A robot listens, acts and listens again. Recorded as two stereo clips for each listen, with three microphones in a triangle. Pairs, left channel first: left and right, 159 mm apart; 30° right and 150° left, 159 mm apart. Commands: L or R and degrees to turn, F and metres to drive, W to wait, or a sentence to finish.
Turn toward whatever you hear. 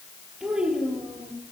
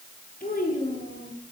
Found it: a child speaking, straight ahead, over 4 m away.